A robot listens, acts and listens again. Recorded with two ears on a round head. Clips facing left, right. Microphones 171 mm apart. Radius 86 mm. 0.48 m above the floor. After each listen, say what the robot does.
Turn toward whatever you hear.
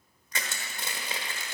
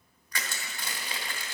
Turn 20° left.
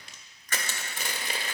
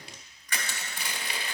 Turn 135° left.
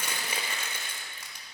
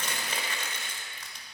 Turn 10° left.
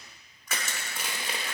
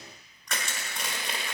Facing the crushing, 1 to 2 m away.